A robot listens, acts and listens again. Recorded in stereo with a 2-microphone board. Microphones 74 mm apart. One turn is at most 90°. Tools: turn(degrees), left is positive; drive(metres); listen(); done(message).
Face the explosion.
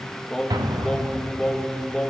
turn(degrees=-65)
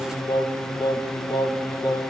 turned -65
listen()
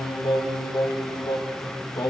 done("I heard an explosion, but can't make it out now. It was about straight ahead or 50° right.")